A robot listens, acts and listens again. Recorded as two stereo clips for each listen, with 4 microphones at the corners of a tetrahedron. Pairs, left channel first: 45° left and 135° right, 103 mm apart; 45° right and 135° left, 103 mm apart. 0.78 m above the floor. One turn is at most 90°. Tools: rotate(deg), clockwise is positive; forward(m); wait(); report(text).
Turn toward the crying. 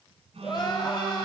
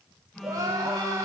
rotate(-85)
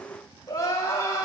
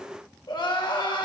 rotate(10)
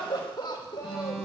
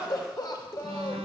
report("Found it: crying, straight ahead, 2 to 4 m away.")